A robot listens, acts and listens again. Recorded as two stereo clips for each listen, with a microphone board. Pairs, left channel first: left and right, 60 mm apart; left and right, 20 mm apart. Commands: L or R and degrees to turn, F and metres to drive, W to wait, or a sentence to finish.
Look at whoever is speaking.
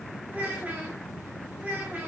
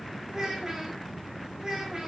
R25
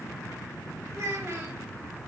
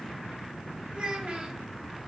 R130
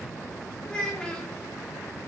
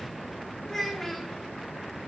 L15
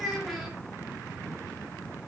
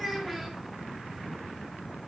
Found it: a child speaking, straight ahead.